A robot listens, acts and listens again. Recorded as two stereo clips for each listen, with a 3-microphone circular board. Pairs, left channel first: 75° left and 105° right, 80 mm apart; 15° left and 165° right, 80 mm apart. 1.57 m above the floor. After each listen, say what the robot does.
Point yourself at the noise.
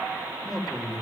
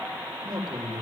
Turn 165° left.
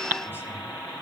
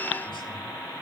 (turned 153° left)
Turn 10° left.
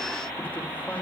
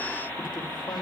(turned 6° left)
Keep listening.
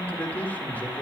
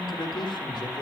Found it: a man speaking, straight ahead, 2 to 4 m away.